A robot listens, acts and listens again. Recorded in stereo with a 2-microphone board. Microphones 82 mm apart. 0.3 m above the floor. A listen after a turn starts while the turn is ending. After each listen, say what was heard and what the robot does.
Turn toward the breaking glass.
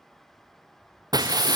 The breaking glass: about 55° right or 125° right. Turn 55° right.
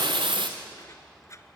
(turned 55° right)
Keep listening.
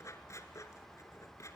I heard breaking glass, but can't make it out now. It was about straight ahead or 70° right.